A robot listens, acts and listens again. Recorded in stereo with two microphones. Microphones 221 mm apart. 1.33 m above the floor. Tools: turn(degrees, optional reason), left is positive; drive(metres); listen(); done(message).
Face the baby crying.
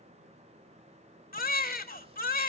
turn(degrees=40, reason="The baby crying: about 40° left or 140° left.")
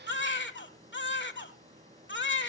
turn(degrees=85, reason="So it is at 85° left.")
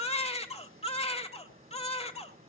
turn(degrees=35, reason="The baby crying is now 35° left.")
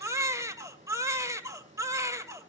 turn(degrees=-15, reason="The baby crying is now 15° right.")
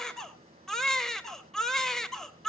done("Facing the baby crying.")